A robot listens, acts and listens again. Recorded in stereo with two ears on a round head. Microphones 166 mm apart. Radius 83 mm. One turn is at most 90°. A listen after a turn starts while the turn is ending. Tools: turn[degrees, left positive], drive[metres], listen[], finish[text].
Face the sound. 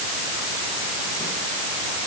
Action: listen[]
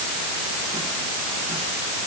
Action: listen[]
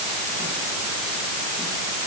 Action: finish[I can't make out anything to turn to.]